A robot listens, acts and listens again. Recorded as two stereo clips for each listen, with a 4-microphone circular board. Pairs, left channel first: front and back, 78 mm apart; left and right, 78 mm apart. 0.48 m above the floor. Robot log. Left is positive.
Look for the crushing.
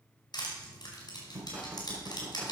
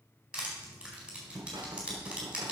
note: The crushing: 15° right.
cmd yaw -15
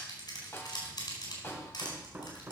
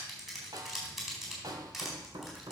end: Facing the crushing, over 4 m away.